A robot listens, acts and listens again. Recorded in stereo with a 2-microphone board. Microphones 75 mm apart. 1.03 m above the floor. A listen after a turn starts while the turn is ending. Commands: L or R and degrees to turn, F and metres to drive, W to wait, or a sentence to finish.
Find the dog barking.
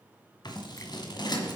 W
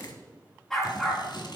L30
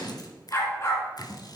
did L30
L145
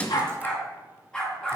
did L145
L10
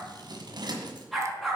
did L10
Found it: a dog barking, straight ahead.